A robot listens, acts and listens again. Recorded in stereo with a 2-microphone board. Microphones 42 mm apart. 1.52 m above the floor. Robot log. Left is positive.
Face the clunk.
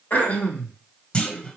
note: The clunk: about 25° left or 155° left.
cmd yaw +25
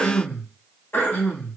cmd idle
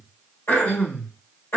end: I heard a clunk, but can't make it out now. It was about straight ahead or 130° left.